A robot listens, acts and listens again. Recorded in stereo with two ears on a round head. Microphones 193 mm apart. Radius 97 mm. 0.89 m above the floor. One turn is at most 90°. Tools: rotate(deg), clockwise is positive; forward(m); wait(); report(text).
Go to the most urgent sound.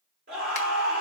rotate(40)
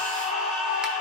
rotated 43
forward(1.0)
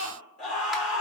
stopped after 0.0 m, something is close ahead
report("Something is in my way. I am facing the scream but have not reached it.")